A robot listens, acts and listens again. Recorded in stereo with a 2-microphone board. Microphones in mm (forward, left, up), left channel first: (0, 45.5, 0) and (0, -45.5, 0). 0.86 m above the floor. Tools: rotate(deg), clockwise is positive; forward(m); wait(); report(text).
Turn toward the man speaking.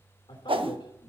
rotate(-65)
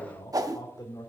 rotate(-45)
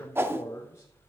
rotate(-30)
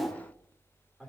report("Found it: a man speaking, straight ahead.")